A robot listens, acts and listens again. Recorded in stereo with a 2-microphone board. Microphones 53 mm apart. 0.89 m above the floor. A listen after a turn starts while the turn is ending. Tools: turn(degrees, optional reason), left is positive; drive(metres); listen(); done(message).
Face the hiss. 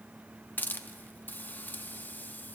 turn(degrees=35, reason="The hiss: about 35° left or 145° left.")
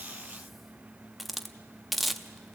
done("Facing the hiss, under 1 m away.")